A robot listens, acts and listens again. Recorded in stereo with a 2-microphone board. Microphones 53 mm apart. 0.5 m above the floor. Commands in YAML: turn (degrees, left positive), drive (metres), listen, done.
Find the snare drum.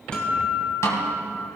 turn: 70
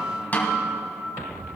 turn: 35
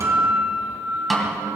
done: "Facing the snare drum, 2 to 4 m away."